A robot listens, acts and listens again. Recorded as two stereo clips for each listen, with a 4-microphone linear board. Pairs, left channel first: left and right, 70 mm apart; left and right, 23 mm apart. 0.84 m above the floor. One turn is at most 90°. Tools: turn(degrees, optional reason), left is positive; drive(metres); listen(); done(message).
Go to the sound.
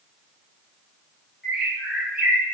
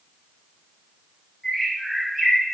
turn(degrees=-30)
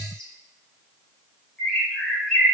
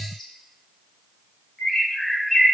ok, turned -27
turn(degrees=15, reason="So it is at 15° left.")
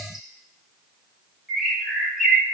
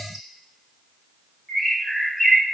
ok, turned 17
drive(metres=1.0)
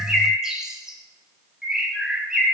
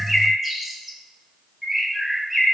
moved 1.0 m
turn(degrees=-10, reason="The bird is now 10° right.")
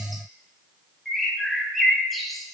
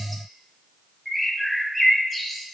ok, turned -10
drive(metres=1.0)
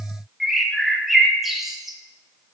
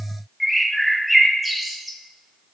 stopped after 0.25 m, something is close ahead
done("Arrived at the bird, straight ahead.")